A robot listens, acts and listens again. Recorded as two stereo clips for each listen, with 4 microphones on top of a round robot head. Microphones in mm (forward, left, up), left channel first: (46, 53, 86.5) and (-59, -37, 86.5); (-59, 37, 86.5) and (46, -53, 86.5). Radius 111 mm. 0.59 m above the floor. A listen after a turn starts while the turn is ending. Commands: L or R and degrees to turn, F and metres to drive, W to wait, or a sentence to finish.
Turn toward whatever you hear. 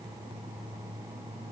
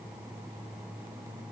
W
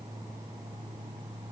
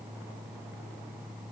W
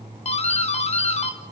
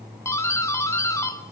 L70
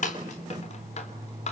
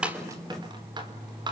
L15
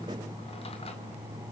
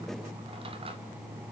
W
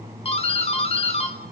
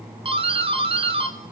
Facing the doorbell.